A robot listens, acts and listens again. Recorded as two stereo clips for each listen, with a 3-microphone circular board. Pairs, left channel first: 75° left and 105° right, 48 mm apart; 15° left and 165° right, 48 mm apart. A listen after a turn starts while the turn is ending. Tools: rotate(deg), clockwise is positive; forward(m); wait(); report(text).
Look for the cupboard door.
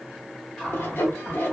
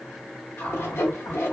report("Found it: a cupboard door, straight ahead.")